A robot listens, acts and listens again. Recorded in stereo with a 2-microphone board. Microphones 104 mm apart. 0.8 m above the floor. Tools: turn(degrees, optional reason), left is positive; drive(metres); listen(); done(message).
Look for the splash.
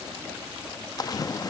turn(degrees=40, reason="The splash: about 40° left or 140° left.")
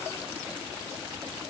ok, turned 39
listen()
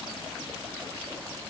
done("I heard a splash, but can't make it out now. It was about straight ahead or 105° left.")